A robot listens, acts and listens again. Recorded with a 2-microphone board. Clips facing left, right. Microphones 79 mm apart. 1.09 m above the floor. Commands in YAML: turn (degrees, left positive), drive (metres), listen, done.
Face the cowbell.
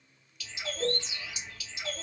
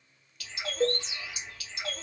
turn: -55
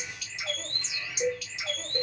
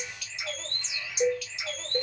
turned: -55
turn: -50
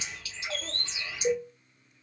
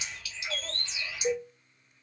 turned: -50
turn: -10
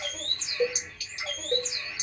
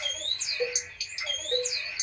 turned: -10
done: "Found it: a cowbell, straight ahead."